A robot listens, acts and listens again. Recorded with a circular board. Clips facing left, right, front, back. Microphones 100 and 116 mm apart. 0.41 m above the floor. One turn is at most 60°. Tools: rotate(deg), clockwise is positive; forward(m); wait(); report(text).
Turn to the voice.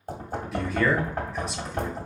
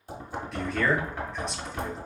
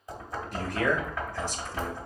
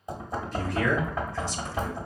report("Facing the man speaking, 1 to 2 m away.")